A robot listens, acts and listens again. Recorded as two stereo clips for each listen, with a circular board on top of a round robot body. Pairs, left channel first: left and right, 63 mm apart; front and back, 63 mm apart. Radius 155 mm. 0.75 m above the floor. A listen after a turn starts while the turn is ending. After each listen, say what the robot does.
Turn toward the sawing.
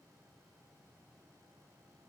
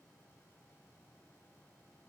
Keep listening.
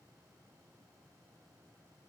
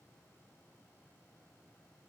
Keep listening.
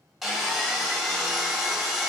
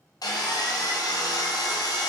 Found it: sawing, straight ahead.